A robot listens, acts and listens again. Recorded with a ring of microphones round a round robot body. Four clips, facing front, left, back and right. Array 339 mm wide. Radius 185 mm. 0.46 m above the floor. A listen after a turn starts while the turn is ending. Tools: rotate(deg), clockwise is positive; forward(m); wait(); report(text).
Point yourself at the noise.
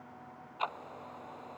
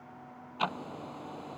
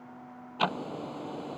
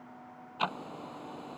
rotate(175)
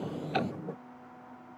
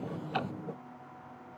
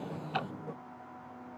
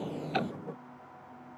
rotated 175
wait()
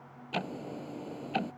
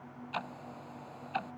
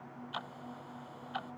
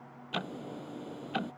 rotate(35)
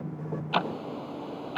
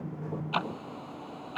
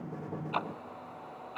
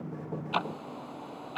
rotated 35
report("Facing the ticking.")